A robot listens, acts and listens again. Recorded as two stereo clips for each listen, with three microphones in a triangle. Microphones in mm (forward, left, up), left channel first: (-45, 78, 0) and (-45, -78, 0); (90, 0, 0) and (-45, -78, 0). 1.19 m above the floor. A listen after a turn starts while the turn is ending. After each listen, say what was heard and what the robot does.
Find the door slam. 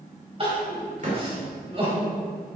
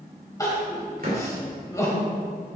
The door slam: 125° right. Turn 125° right.
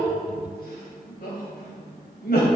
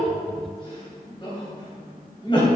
Facing where the door slam came from. I can't hear it now.